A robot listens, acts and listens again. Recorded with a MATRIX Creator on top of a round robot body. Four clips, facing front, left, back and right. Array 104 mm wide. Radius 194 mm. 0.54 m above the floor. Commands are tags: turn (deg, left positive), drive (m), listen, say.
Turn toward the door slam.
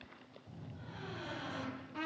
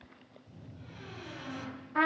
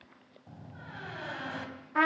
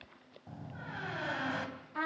<turn deg="-115"/>
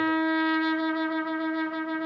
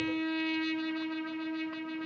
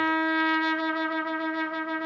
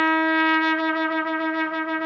<say>I heard a door slam from this way, but can't make it out now.</say>